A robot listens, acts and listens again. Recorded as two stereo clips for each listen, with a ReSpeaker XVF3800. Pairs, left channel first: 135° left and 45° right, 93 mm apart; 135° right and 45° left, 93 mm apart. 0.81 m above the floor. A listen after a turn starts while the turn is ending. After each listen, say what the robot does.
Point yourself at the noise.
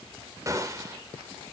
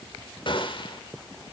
Turn 100° right.
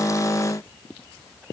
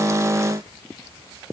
I heard a gunshot from this way, but can't make it out now.